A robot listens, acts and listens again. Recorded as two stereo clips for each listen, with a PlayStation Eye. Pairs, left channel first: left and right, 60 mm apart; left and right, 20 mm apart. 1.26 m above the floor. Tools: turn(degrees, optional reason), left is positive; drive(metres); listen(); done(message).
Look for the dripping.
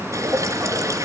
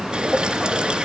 turn(degrees=-55, reason="The dripping: about 55° right or 125° right.")
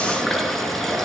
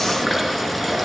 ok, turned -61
done("Found it: dripping, straight ahead.")